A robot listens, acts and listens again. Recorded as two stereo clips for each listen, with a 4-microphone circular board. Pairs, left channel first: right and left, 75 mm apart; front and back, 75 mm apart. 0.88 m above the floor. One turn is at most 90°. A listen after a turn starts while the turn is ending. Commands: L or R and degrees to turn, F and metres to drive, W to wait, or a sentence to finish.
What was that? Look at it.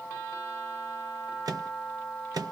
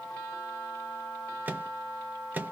L90
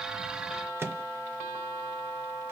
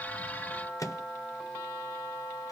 L35
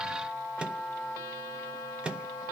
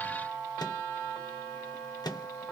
L15
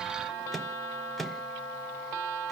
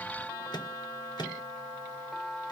Found it: a microwave, straight ahead, under 1 m away.